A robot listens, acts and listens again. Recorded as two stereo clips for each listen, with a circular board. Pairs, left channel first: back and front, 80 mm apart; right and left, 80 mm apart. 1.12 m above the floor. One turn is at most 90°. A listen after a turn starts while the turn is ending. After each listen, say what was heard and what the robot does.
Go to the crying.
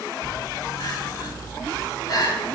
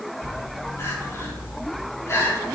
The crying: 145° right. Turn 90° right.
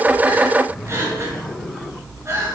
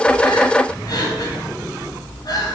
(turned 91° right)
The crying is now 55° right. Turn 55° right.
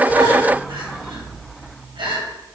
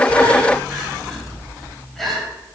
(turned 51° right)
Drive 1.0 m forward.
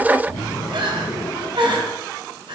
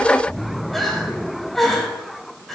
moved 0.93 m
Drive 1.0 m forward.
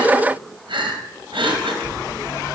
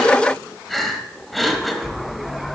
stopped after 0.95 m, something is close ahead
I am next to the crying.